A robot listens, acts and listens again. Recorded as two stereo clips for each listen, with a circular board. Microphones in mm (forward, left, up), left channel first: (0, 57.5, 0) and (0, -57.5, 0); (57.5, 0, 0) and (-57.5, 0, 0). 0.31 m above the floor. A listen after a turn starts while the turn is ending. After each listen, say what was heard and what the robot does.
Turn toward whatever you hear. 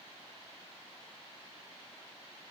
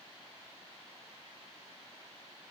Keep listening.
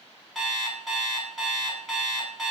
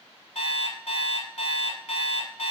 Found it: an alarm clock, straight ahead.